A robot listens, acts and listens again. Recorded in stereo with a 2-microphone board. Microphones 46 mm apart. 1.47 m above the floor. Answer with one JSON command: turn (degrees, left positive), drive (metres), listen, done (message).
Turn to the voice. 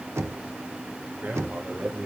{"turn": -40}
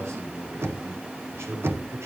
{"turn": -100}
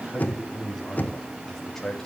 {"turn": 10}
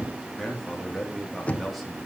{"done": "Found it: a man speaking, straight ahead."}